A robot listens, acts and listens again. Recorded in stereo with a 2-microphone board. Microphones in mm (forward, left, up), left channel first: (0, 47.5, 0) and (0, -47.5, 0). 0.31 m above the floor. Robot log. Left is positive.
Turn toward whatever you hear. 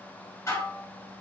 note: The dishes clattering: about 35° left or 145° left.
cmd yaw +35
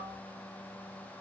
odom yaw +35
cmd idle
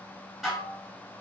end: Found it: dishes clattering, straight ahead, 2 to 4 m away.